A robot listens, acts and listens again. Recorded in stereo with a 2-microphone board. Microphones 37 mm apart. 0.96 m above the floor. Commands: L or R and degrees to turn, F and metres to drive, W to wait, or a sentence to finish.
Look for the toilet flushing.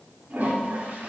R65
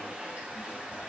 R45
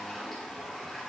Found it: a toilet flushing, straight ahead, 2 to 4 m away.